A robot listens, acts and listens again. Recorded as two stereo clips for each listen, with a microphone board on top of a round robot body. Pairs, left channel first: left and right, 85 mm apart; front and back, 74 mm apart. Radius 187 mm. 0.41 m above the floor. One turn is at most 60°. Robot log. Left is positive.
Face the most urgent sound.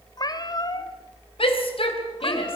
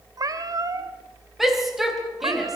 note: The shout: 95° left.
cmd yaw +60
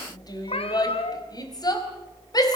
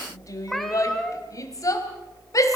note: The shout is now 45° left.
cmd yaw +45
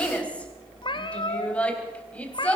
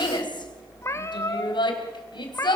note: The shout is now 15° left.
cmd yaw +15
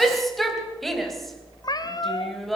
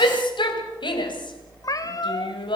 end: Facing the shout, 2 to 4 m away.